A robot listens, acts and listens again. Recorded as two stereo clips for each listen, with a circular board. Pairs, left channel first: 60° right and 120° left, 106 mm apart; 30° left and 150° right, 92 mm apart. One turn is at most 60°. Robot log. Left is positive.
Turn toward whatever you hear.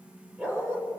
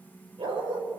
note: The dog barking: 170° right.
cmd yaw -60
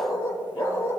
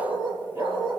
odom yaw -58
note: The dog barking is now 120° right.
cmd yaw -60
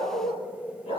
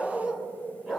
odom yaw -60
note: The dog barking is now 65° right.
cmd yaw -60
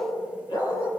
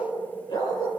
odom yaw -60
note: The dog barking is now 15° right.
cmd yaw -15
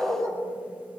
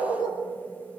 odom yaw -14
end: Found it: a dog barking, straight ahead.